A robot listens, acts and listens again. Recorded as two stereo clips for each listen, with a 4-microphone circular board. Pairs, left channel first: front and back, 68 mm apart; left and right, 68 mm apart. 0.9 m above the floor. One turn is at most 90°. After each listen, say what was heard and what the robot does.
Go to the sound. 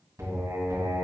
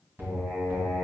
The singing: 140° right. Turn 90° right.
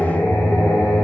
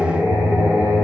The singing is now 35° right. Turn 35° right.
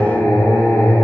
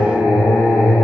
The singing is now 10° left. Turn 10° left.
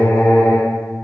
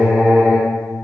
Drive 1.0 m forward.
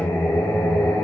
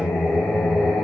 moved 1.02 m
Drive 1.0 m forward.
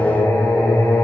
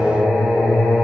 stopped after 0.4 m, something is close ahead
I am next to the singing.